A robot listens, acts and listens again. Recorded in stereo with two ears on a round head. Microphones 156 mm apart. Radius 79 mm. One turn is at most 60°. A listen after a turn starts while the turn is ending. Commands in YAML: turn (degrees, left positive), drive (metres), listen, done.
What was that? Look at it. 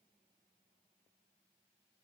listen: true
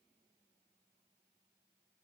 listen: true
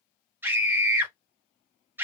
turn: -30
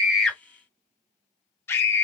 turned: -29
turn: 15
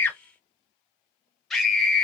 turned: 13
done: "Facing the scream."